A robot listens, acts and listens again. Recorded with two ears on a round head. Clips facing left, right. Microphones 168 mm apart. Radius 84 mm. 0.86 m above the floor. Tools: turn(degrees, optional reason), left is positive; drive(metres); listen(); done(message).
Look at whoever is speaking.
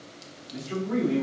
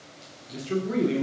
turn(degrees=-40, reason="The man speaking: about 40° right or 140° right.")
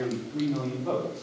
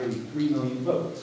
turn(degrees=-15, reason="So it is at 15° right.")
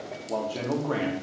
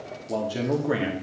turn(degrees=-20, reason="The man speaking is now 20° right.")
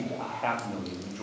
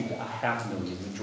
turn(degrees=-20, reason="The man speaking is now 20° right.")
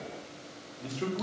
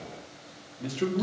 turn(degrees=-25, reason="The man speaking is now 25° right.")
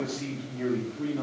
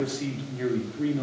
turn(degrees=-10, reason="The man speaking is now 10° right.")
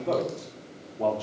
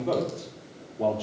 done("Facing the man speaking.")